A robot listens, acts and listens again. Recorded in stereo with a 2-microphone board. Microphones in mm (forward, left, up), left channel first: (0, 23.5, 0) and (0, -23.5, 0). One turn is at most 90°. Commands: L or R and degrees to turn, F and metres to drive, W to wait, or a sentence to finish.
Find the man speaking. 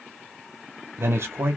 R60
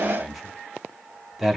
Facing the man speaking, 1 to 2 m away.